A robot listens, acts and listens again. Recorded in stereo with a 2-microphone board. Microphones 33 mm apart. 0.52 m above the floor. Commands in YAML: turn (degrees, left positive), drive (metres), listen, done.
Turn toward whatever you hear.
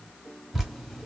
turn: -30
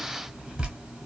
turn: -140
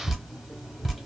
done: "Facing the dripping, 1 to 2 m away."